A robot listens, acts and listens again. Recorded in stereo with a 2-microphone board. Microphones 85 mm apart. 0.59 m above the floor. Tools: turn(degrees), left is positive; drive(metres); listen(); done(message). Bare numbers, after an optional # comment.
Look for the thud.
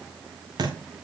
# The thud: about 55° right or 125° right.
turn(-55)
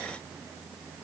listen()
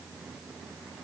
done("I heard a thud, but can't make it out now. It was about straight ahead or 70° right.")